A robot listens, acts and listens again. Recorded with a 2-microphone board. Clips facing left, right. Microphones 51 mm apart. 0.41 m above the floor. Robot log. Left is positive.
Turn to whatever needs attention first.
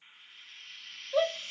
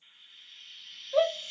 cmd yaw +30
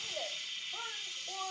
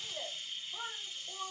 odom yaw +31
note: So it is at 150° left.
cmd yaw +150
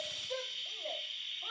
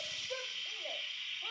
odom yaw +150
end: Found it: a shout, straight ahead.